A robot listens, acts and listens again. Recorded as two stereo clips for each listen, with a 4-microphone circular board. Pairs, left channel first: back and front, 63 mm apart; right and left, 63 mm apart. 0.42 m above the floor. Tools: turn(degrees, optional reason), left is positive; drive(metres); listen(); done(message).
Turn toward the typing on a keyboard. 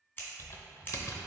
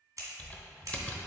turn(degrees=-155, reason="The typing on a keyboard: 155° right.")
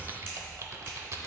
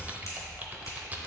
turn(degrees=30, reason="The typing on a keyboard is now 30° left.")
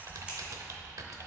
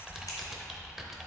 done("Facing the typing on a keyboard, under 1 m away.")